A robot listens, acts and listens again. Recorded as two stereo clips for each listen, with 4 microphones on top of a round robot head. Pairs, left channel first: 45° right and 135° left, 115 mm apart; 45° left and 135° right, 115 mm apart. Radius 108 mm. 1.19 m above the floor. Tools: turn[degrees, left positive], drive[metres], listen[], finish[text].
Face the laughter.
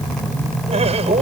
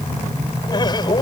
Thought: The laughter: 100° left.
Action: turn[100]
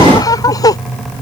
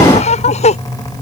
Thought: The laughter is now 15° left.
Action: turn[15]
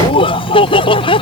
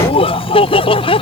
Action: finish[Found it: laughter, straight ahead.]